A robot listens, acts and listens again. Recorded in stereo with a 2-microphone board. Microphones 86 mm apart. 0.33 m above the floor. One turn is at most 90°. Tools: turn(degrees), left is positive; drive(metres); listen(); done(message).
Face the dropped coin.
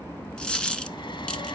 turn(degrees=30)
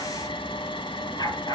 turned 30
listen()
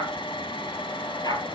done("I heard a dropped coin, but can't make it out now. It was about 20° right or 140° left.")